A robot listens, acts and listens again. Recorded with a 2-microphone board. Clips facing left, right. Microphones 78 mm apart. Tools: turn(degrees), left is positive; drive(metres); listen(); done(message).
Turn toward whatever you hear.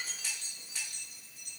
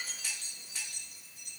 listen()
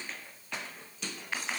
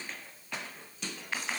listen()
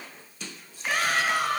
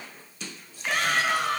turn(degrees=30)
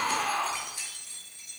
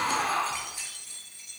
turn(degrees=-25)
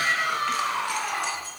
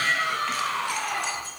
turn(degrees=15)
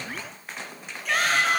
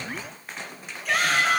done("Found it: a shout, straight ahead, over 4 m away.")